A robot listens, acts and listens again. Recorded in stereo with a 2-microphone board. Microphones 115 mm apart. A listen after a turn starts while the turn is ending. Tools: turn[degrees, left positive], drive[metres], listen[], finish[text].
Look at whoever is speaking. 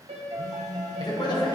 Thought: The man speaking: about 40° left or 140° left.
Action: turn[40]
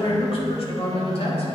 Thought: So it is at 90° left.
Action: turn[90]
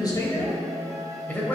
Thought: The man speaking is now 20° left.
Action: turn[20]
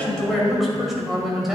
Action: finish[Facing the man speaking, 1 to 2 m away.]